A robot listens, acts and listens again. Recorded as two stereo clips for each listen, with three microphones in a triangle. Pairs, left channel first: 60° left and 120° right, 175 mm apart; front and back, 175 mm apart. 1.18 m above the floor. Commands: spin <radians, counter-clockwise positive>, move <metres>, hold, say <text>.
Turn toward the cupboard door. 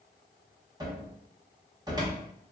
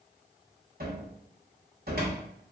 spin 3.05
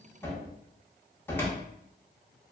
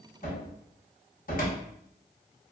spin -0.26
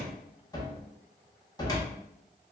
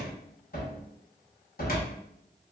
say Found it: a cupboard door, straight ahead, under 1 m away.